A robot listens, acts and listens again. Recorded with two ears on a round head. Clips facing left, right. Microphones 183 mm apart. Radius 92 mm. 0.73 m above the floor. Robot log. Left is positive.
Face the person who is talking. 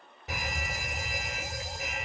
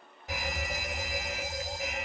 cmd idle
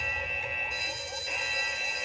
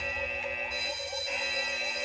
cmd idle
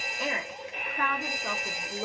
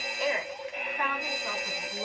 note: The woman speaking: about 55° left or 125° left.
cmd yaw +55
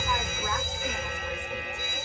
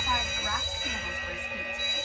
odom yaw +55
cmd idle
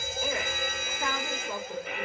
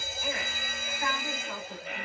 note: So it is at 70° left.
cmd yaw +70
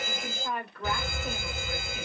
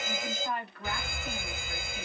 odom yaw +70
note: The woman speaking is now 40° left.
cmd yaw +40
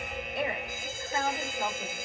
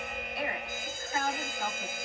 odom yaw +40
note: The woman speaking is now 20° left.
cmd yaw +20
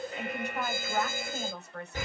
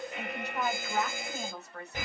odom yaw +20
end: Found it: a woman speaking, straight ahead.